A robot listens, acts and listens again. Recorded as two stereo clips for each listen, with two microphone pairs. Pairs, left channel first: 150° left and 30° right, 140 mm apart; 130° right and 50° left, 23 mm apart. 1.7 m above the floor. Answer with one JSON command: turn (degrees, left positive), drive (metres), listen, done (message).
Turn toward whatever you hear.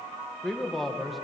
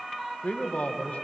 {"turn": -120}
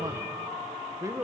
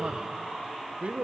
{"turn": 40}
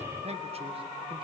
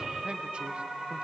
{"turn": 20}
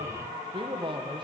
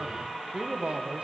{"turn": 25}
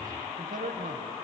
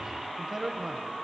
{"turn": -15}
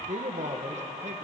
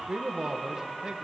{"done": "Found it: a man speaking, straight ahead."}